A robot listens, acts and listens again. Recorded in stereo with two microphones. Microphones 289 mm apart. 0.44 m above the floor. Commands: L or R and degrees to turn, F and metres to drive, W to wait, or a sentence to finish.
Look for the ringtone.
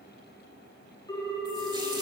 L30
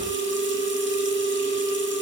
L135
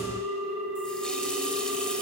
Found it: a ringtone, straight ahead, 2 to 4 m away.